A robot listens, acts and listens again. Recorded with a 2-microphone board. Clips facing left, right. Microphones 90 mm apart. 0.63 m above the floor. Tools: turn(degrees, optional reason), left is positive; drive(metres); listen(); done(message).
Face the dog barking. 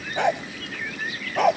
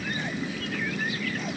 turn(degrees=90)
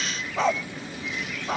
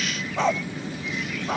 done("Facing the dog barking.")